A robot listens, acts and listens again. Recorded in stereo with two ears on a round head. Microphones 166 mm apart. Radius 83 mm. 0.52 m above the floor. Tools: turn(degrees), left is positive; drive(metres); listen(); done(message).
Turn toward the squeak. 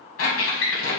turn(degrees=90)
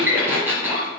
turn(degrees=-10)
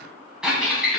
done("Found it: a squeak, straight ahead, 1 to 2 m away.")